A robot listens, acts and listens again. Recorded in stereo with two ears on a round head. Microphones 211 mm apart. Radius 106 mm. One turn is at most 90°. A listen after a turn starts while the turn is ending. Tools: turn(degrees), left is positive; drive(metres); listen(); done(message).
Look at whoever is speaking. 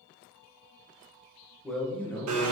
turn(degrees=30)
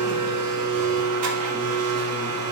listen()
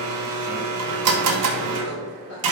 listen()
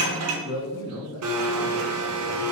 turn(degrees=90)
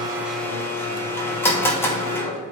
turn(degrees=20)
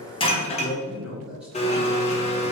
done("Facing the man speaking.")